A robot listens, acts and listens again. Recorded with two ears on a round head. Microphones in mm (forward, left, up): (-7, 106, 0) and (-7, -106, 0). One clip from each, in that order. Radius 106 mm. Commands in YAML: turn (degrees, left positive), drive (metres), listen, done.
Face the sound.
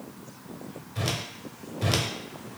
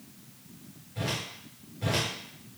turn: 45
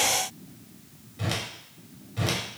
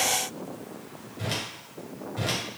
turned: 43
turn: 10
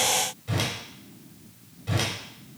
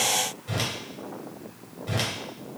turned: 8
done: "Found it: a whoosh, straight ahead."